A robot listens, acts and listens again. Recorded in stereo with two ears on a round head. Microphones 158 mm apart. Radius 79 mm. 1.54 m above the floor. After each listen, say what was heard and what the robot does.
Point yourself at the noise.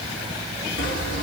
Turn 90° left.
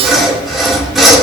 Facing the sawing.